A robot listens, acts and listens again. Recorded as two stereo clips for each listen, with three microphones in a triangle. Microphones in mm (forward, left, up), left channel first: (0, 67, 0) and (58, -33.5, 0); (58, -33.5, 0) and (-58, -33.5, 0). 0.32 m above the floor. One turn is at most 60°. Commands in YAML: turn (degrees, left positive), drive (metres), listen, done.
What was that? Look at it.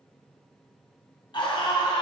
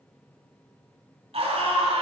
turn: 60
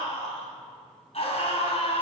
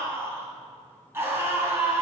turn: 60
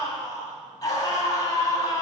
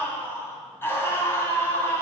turn: 60
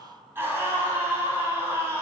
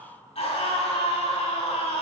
turn: 10
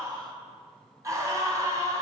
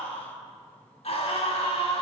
done: "Found it: a scream, straight ahead."